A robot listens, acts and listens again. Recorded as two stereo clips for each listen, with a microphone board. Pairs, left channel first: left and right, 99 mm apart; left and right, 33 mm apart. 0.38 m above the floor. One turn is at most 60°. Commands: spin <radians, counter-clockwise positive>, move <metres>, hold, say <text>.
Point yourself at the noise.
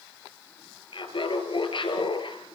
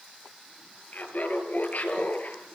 spin 0.96
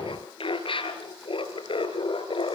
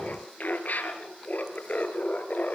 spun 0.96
spin 1.05
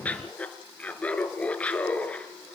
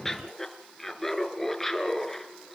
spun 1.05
spin 0.26
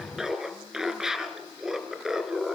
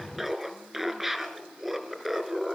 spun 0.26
say Facing the laughter, over 4 m away.